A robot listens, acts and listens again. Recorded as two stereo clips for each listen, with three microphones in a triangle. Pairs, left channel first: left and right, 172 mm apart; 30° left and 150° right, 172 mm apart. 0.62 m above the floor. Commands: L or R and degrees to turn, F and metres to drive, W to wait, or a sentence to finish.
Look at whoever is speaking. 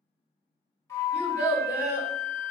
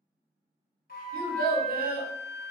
R165
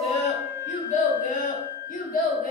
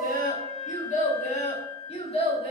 L85
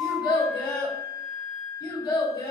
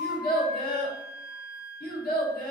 L30
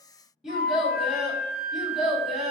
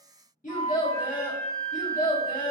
Found it: a child speaking, straight ahead.